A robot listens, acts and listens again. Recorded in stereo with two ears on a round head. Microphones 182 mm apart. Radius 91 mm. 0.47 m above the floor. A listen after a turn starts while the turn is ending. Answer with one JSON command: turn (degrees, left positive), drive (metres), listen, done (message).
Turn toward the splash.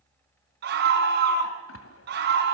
{"turn": 90}
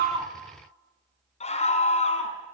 {"done": "Facing where the splash came from. I can't hear it now."}